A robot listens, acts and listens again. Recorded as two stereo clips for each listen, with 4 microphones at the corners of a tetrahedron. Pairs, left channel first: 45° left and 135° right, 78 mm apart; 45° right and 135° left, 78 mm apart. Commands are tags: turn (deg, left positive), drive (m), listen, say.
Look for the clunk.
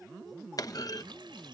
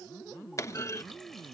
<say>Found it: a clunk, straight ahead.</say>